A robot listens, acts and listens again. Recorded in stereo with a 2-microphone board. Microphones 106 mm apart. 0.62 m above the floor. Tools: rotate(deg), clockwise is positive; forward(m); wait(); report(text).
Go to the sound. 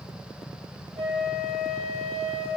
rotate(65)
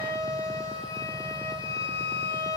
rotate(40)
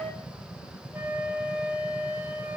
rotate(15)
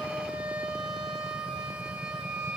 forward(1.0)
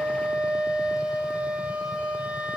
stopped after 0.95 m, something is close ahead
rotate(10)
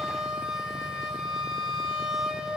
report("Arrived at the flute, straight ahead.")